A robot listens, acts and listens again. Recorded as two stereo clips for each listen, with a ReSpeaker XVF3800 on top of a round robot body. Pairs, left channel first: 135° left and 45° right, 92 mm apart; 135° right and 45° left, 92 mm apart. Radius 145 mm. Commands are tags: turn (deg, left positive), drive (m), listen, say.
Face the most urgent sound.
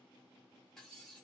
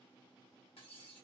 <listen/>
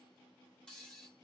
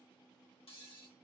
<listen/>
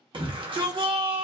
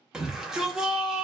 <turn deg="-35"/>
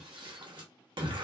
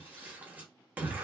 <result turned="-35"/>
<turn deg="-25"/>
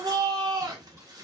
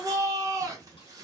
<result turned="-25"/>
<say>Found it: a shout, straight ahead, under 1 m away.</say>